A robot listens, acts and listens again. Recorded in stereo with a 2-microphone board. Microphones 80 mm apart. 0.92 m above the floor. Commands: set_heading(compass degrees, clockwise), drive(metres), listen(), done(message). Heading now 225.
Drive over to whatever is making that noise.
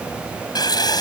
set_heading(165)
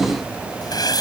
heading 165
set_heading(110)
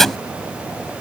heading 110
drive(1.0)
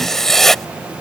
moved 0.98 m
drive(1.0)
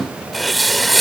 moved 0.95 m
drive(1.0)
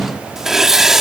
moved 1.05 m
drive(1.0)
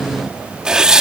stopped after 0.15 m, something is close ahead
set_heading(120)
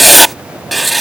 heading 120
done("I am next to the writing.")